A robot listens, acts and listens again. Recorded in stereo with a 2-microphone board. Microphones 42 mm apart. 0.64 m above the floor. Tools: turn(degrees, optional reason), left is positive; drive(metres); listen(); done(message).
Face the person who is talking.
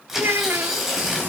turn(degrees=-70, reason="The child speaking: about 70° right or 110° right.")
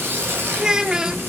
turn(degrees=-20, reason="So it is at 20° right.")
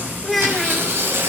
done("Facing the child speaking, under 1 m away.")